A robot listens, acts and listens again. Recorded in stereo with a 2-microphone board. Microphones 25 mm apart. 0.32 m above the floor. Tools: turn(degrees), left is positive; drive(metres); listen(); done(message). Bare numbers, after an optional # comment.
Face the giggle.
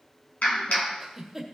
# The giggle: about 15° right or 165° right.
turn(-15)
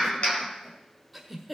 done("Facing the giggle.")